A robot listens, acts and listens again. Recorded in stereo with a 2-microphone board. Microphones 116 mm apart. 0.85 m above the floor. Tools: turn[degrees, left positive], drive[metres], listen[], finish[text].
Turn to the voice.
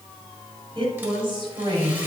Thought: The woman speaking: about 45° right or 135° right.
Action: turn[-45]
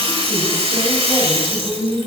Action: finish[Facing the woman speaking.]